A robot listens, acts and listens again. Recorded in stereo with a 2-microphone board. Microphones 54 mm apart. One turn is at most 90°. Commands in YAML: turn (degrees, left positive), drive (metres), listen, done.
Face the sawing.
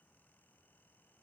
listen: true
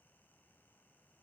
listen: true
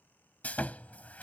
turn: 30
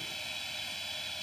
done: "Found it: sawing, straight ahead."